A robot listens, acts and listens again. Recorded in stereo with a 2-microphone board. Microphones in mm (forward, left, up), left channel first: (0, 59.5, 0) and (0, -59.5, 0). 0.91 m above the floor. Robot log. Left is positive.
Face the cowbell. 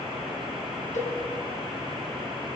cmd yaw +90
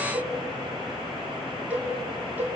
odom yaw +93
note: So it is at 15° right.
cmd yaw -15
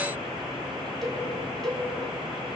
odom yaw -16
end: Facing the cowbell.